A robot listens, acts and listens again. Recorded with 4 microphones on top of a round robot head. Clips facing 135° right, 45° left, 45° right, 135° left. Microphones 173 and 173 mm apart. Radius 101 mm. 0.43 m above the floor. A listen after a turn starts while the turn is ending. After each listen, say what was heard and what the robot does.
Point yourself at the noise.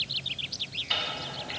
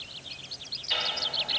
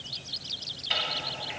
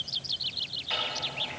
The ticking: 100° right. Turn 100° right.
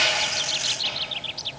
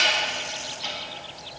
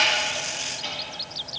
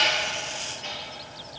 Keep listening.
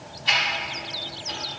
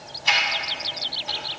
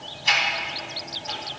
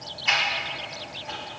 Facing the ticking, 1 to 2 m away.